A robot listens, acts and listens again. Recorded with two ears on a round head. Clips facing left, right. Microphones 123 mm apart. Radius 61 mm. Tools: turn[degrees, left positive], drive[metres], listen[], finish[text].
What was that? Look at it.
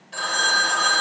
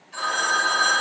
Thought: The phone ringing: about 60° left or 120° left.
Action: turn[60]
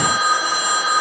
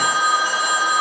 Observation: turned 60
Action: finish[Found it: a phone ringing, straight ahead.]